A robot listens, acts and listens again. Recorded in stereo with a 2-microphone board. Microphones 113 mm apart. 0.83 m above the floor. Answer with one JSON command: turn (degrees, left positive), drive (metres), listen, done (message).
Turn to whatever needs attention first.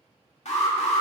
{"turn": 90}
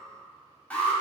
{"turn": 10}
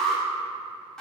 {"done": "Found it: an alarm, straight ahead."}